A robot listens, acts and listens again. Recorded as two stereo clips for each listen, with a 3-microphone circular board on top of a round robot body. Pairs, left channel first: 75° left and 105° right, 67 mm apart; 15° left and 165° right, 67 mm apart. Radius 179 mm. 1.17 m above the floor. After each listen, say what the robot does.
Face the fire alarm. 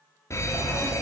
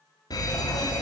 Turn 30° left.
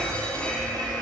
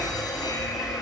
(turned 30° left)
Facing the fire alarm, over 4 m away.